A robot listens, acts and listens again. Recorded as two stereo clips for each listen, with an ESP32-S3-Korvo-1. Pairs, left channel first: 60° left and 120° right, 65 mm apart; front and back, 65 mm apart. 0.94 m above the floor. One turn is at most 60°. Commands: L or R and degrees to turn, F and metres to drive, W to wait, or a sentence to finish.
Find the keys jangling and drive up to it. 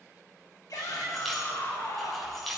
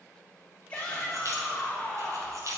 L60
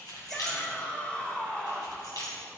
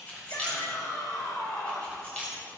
L60
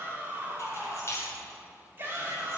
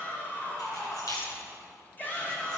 L15
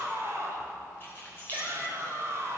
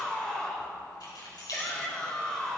F1.0
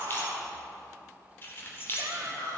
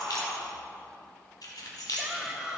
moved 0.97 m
F1.0
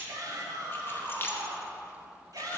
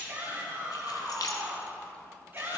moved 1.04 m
L10
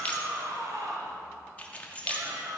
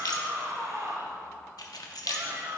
F1.0
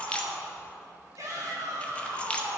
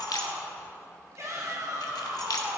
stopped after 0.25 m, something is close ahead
R10
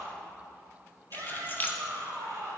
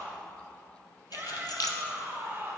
I am next to the keys jangling.